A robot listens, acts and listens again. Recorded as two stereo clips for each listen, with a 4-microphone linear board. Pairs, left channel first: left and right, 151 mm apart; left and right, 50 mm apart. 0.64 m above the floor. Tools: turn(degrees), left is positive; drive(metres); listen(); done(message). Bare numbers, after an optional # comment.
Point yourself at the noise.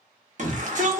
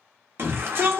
# The shout: about 55° right or 125° right.
turn(-55)
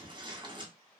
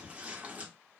# So it is at 40° right.
turn(-40)
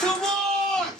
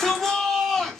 done("Found it: a shout, straight ahead, under 1 m away.")